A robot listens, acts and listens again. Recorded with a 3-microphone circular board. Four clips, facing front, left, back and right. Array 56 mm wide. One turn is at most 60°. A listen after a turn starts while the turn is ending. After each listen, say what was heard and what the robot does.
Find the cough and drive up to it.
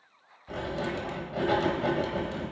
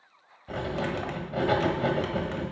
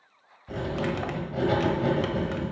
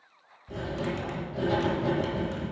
Keep listening.
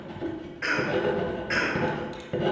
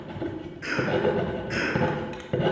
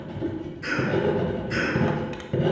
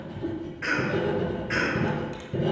The cough: 25° right. Turn 25° right.
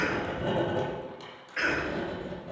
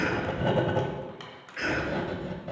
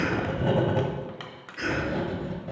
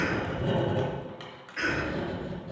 Drive 1.0 m forward.
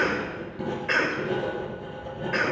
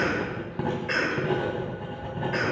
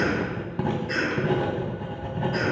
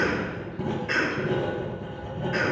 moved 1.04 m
The cough is now 10° left. Turn 10° left.
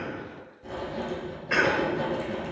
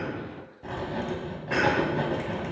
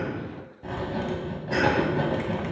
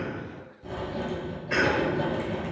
Keep listening.
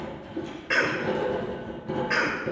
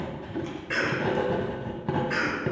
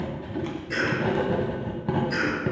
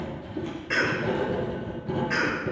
Drive 1.0 m forward.
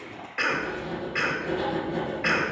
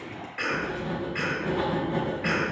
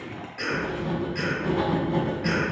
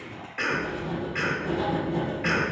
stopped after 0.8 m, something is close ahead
I am next to the cough.